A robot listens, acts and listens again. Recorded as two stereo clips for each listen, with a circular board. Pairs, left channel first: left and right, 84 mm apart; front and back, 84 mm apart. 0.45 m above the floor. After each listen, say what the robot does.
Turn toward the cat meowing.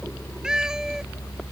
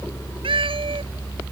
Turn 175° right.
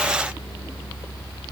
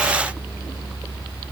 Keep listening.
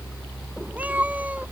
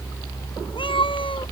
Turn 15° right.
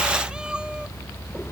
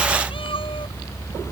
Turn 10° right.
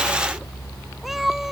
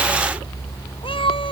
Facing the cat meowing.